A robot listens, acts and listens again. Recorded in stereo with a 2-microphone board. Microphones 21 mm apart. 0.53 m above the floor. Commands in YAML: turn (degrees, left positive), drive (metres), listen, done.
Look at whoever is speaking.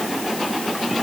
listen: true
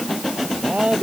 turn: -65
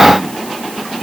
listen: true
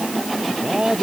turn: -50
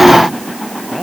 listen: true
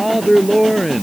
turn: -10
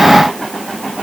listen: true
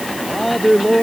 done: "Facing the man speaking."